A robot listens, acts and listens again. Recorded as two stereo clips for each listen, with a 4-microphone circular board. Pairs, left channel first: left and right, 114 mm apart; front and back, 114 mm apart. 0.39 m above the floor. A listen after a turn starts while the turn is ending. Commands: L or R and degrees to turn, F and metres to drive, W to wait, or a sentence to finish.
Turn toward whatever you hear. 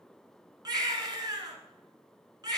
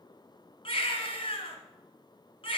R35
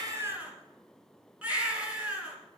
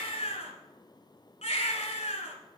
R10
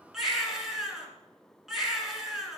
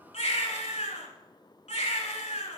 Facing the baby crying, 1 to 2 m away.